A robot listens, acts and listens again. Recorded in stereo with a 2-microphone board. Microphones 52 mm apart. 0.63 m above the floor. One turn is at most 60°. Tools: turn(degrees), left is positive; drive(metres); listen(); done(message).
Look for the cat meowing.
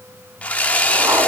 listen()
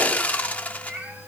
turn(degrees=-30)
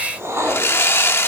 listen()
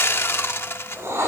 listen()
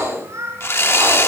turn(degrees=-60)
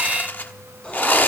turn(degrees=-55)
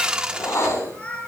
turn(degrees=25)
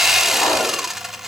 listen()
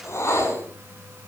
listen()
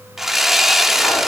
done("Facing where the cat meowing came from. I can't hear it now.")